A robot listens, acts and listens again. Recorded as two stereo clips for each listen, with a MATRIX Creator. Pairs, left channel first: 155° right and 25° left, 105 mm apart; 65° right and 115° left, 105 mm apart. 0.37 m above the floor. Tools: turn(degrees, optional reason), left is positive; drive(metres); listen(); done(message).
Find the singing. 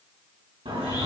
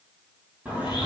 turn(degrees=35, reason="The singing: 35° left.")
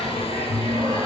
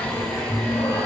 turn(degrees=-10, reason="The singing is now 10° right.")
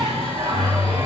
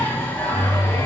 done("Facing the singing.")